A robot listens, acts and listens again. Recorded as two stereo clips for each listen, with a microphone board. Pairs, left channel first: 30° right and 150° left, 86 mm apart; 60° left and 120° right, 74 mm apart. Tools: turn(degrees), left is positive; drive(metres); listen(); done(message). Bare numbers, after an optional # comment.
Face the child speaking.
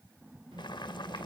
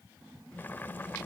# The child speaking: 140° left.
turn(140)
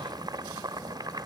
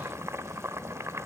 # The child speaking is now 25° right.
turn(-25)
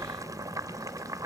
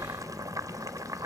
# The child speaking is now 10° right.
turn(-10)
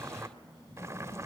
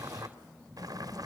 done("Facing the child speaking.")